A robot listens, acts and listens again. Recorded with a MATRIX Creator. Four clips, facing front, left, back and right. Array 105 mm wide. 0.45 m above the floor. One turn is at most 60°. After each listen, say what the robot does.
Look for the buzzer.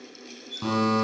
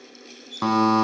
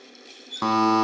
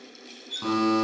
Turn 60° left.
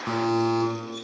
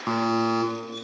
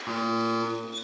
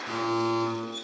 Turn 60° left.
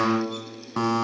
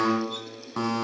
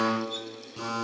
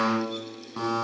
Turn 20° left.
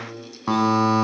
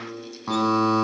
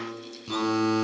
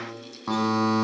Facing the buzzer.